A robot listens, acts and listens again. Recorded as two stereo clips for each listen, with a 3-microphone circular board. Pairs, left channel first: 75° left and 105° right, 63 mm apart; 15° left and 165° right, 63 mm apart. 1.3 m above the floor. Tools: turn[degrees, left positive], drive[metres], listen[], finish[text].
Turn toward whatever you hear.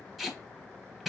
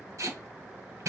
Thought: The tape being pulled: 170° left.
Action: turn[170]
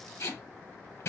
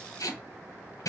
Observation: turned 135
Thought: The tape being pulled is now 35° left.
Action: turn[35]
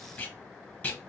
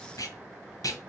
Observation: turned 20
Thought: The tape being pulled is now 15° left.
Action: turn[15]
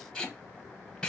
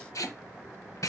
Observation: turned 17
Action: finish[Facing the tape being pulled, under 1 m away.]